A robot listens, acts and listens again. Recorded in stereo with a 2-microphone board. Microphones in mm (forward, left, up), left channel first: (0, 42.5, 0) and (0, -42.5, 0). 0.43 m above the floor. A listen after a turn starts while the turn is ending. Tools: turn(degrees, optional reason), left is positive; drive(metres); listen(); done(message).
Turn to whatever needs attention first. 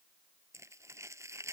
listen()
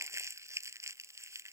listen()
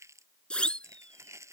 turn(degrees=30)
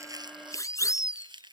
turn(degrees=140, reason="So it is at 140° left.")
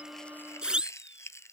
turn(degrees=-10, reason="The siren is now 10° right.")
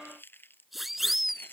done("Facing the siren.")